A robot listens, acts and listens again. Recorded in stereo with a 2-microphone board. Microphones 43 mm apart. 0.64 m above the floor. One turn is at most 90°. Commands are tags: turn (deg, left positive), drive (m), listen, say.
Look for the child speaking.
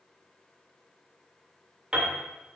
<listen/>
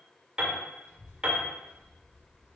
<turn deg="70"/>
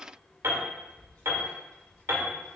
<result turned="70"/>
<turn deg="35"/>
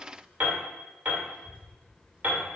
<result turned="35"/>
<say>Facing the child speaking, 2 to 4 m away.</say>